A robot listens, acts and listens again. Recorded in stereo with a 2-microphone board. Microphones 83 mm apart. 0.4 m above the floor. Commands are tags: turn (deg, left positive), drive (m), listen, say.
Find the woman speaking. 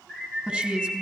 <turn deg="-30"/>
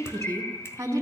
<turn deg="-140"/>
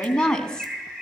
<turn deg="10"/>
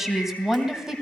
<say>Facing the woman speaking.</say>